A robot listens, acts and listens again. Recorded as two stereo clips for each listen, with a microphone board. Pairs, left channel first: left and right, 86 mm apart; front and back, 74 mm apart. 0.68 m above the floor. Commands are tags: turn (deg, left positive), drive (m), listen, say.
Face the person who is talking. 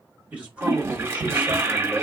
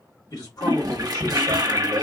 <turn deg="-15"/>
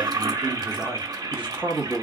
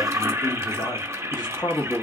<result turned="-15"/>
<turn deg="-40"/>
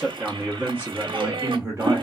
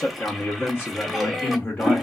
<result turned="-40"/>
<turn deg="-60"/>
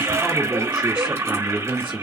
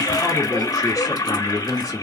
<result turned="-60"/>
<turn deg="-20"/>
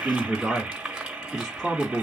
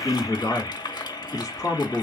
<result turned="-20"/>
<say>Facing the man speaking, 1 to 2 m away.</say>